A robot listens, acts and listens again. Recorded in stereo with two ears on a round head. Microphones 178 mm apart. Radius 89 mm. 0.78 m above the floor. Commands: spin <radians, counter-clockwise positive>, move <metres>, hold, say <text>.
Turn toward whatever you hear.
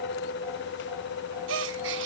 spin -1.13
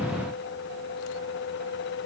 hold
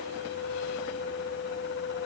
say I heard a gasp, but can't make it out now. It was about straight ahead or 50° right.